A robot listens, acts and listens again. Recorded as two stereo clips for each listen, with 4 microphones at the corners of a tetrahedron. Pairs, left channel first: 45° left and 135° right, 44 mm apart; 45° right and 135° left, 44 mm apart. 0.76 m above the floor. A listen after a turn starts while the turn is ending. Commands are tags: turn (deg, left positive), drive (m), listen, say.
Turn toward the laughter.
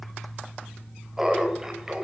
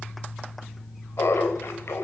<turn deg="-60"/>
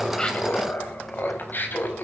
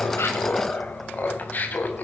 <say>Found it: laughter, straight ahead, over 4 m away.</say>